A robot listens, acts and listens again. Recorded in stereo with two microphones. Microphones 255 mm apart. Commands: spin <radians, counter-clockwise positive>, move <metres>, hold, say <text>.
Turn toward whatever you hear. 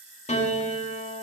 spin 0.44
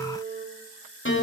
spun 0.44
spin 2.27
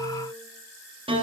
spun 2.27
spin -0.35
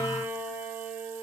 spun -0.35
spin -0.17
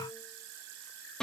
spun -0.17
say Facing the piano.